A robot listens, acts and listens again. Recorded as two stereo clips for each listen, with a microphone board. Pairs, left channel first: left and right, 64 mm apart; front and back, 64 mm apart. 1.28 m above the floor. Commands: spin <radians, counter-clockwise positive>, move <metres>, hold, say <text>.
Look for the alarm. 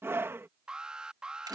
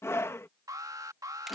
spin -2.97
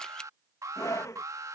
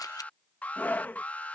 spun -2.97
spin -1.13
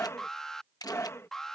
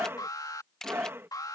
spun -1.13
say Facing the alarm.